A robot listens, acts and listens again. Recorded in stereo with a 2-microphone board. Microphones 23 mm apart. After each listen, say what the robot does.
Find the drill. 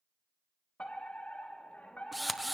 Turn 30° left.
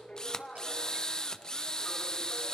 Turn 145° left.
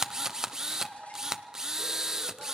Turn 25° right.
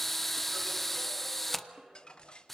Facing the drill.